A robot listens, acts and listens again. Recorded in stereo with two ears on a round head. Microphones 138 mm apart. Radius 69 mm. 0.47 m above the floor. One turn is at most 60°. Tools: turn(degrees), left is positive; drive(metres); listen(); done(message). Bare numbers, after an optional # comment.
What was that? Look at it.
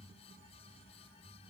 listen()
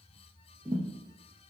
# The thud: about 15° right or 165° right.
turn(-15)
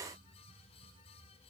listen()
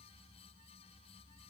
done("I heard a thud, but can't make it out now. It was about straight ahead or 150° right.")